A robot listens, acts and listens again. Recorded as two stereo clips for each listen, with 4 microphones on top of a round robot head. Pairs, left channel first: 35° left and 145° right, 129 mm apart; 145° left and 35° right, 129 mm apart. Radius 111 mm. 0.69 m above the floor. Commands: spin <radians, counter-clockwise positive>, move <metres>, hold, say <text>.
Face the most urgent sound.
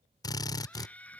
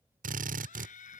spin 2.09
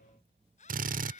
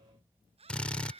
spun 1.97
say Facing the scream.